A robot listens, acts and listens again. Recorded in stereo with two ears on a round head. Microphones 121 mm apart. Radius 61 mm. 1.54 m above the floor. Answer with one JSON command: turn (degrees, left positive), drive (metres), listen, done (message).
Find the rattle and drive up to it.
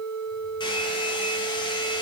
{"listen": true}
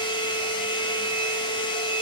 {"listen": true}
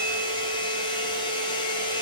{"done": "I can't make out a rattle to turn to."}